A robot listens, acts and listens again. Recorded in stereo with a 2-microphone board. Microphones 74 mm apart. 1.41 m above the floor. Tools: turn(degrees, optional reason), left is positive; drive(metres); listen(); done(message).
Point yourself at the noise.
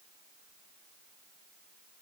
listen()
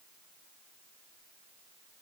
listen()
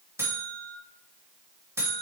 turn(degrees=-35, reason="The buzzer: about 35° right or 145° right.")
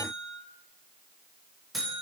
done("Found it: a buzzer, straight ahead, 1 to 2 m away.")